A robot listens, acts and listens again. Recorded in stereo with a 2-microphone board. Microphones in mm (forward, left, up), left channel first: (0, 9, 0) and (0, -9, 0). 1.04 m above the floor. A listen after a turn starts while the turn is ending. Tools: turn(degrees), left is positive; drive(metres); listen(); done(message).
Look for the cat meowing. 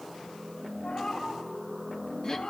turn(degrees=90)
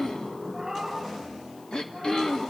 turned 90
turn(degrees=-15)
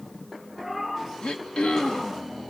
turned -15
done("Facing the cat meowing.")